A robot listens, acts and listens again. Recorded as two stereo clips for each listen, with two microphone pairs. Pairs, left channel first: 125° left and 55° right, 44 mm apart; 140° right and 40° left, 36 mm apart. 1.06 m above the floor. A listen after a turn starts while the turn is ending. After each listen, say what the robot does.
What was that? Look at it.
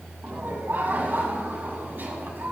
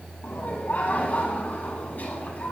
Turn 90° right.
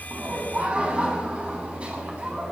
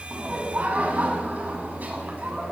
Turn 10° left.
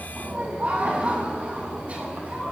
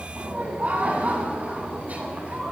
Facing the laughter.